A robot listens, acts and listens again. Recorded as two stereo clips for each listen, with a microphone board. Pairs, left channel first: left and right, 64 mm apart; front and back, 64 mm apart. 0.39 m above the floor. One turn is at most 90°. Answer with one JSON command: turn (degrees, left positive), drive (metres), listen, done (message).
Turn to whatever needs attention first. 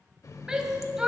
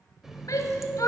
{"turn": -15}
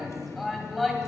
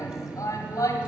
{"done": "Facing the shout."}